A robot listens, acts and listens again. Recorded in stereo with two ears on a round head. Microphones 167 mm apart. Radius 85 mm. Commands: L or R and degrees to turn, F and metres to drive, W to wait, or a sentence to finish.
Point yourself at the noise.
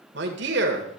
R65
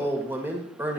R10
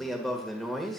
Facing the man speaking, 1 to 2 m away.